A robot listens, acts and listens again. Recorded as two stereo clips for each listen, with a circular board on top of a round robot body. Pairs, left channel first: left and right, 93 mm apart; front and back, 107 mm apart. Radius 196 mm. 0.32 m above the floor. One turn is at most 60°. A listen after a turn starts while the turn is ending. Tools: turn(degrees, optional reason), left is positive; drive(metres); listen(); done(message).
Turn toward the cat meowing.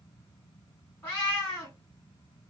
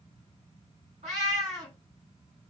turn(degrees=60, reason="The cat meowing: 160° left.")
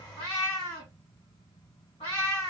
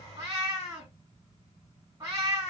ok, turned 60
turn(degrees=60, reason="The cat meowing is now 115° left.")
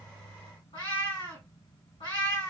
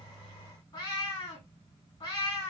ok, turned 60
turn(degrees=55, reason="The cat meowing is now 55° left.")
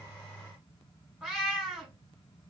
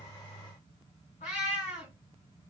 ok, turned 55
done("Found it: a cat meowing, straight ahead.")